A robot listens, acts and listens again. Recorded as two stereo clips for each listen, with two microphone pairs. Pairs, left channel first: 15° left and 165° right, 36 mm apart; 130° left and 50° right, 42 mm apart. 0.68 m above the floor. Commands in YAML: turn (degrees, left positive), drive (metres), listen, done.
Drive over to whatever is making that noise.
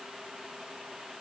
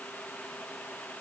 listen: true
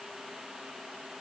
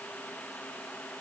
listen: true
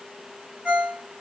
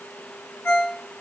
turn: 100
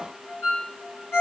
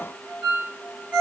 turn: 10
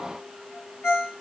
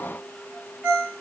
drive: 1.0
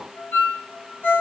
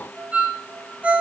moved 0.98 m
turn: 10
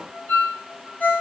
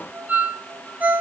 drive: 1.0
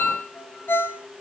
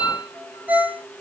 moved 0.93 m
drive: 1.0
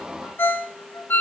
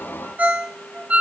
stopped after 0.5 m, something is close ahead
done: "I am next to the ringtone."